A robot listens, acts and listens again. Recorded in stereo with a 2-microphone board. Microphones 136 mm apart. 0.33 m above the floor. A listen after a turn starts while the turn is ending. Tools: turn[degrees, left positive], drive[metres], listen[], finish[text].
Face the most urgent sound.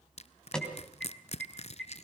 Action: turn[30]
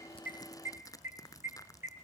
Thought: So it is at 20° right.
Action: turn[-20]
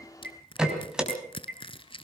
Action: finish[Facing the alarm.]